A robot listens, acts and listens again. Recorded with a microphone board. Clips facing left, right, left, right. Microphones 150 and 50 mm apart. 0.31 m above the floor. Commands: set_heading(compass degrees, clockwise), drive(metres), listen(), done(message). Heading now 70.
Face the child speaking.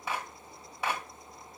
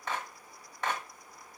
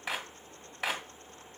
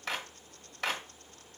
listen()
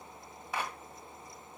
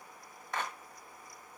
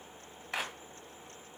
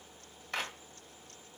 listen()
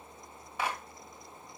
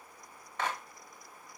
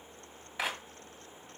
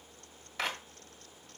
done("I can't make out a child speaking to turn to.")